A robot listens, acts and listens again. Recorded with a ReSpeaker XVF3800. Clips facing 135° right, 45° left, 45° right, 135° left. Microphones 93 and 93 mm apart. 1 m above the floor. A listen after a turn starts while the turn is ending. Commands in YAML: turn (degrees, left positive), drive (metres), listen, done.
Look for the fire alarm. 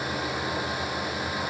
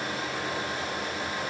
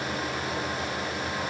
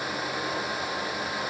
listen: true
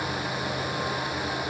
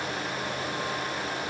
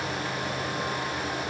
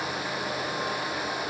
listen: true
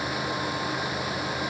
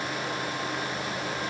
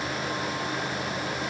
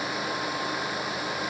done: "I can't make out a fire alarm to turn to."